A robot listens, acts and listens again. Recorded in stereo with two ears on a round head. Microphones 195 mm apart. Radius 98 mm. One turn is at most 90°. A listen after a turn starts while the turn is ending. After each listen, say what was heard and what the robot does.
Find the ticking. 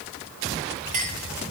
Keep listening.
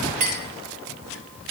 Keep listening.
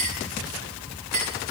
I can't make out ticking, only a clink.